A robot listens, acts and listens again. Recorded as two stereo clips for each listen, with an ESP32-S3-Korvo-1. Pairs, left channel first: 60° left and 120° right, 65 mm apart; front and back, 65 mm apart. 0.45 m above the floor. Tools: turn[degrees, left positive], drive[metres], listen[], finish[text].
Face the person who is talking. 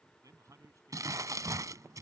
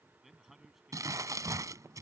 Thought: The man speaking: 95° right.
Action: turn[-95]
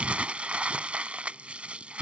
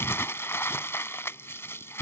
Action: listen[]
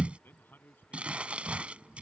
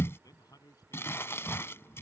Action: finish[Found it: a man speaking, straight ahead.]